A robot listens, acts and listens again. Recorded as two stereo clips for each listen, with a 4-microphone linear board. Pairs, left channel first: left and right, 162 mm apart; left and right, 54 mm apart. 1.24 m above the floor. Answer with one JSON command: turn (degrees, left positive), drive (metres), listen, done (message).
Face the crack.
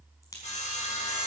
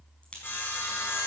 {"turn": 20}
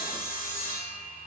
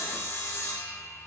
{"listen": true}
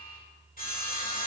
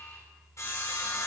{"done": "I heard a crack, but can't make it out now. It was about straight ahead or 140° left."}